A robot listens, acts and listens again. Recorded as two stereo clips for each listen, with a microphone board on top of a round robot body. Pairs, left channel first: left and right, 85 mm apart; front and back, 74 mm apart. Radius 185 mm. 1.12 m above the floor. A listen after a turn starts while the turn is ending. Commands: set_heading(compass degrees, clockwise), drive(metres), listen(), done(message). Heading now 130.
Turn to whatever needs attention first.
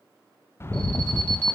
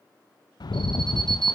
set_heading(325)
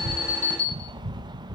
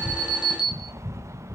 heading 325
set_heading(315)
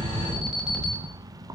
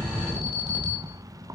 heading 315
listen()
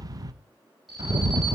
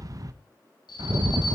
listen()
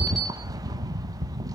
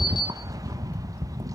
done("I heard an alarm from this way, but can't make it out now.")